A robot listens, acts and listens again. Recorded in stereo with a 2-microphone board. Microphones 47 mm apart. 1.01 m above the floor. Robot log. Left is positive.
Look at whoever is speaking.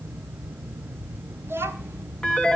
note: The child speaking: about 70° right or 110° right.
cmd yaw -70
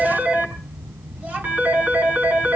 note: So it is at 40° right.
cmd yaw -40
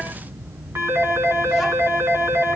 cmd idle
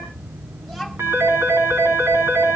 end: Facing the child speaking.